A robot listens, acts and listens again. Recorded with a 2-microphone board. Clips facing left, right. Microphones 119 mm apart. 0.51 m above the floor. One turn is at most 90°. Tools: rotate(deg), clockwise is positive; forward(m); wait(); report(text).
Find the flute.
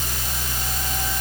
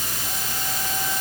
wait()
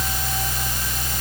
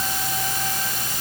wait()
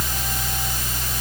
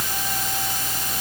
report("I can't make out a flute to turn to.")